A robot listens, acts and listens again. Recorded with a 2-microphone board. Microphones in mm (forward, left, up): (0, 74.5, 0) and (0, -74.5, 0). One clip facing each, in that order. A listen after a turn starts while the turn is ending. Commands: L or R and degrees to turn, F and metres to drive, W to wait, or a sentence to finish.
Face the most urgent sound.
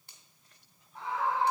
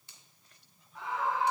L30
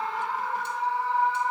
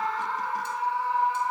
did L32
Found it: a scream, straight ahead.